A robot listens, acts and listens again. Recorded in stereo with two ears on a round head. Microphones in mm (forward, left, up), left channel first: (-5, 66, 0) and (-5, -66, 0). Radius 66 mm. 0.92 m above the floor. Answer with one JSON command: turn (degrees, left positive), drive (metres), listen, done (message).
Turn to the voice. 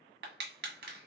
{"listen": true}
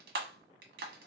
{"listen": true}
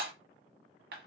{"done": "I can't make out anyone speaking, only crushing."}